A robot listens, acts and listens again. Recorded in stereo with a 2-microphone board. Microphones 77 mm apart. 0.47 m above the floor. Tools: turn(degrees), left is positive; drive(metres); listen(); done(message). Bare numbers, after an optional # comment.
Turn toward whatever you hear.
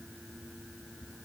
listen()
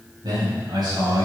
# The man speaking: about 65° right or 115° right.
turn(-65)
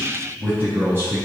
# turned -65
# So it is at 25° right.
turn(-25)
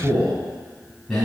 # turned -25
done("Found it: a man speaking, straight ahead.")